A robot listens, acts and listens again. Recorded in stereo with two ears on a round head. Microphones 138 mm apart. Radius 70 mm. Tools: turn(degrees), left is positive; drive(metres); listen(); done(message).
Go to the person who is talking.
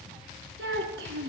turn(degrees=-90)
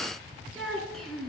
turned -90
drive(metres=1.0)
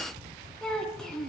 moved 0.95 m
drive(metres=1.0)
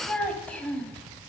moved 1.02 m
turn(degrees=10)
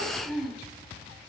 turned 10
drive(metres=1.0)
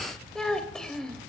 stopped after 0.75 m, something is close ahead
done("Arrived at the child speaking, straight ahead.")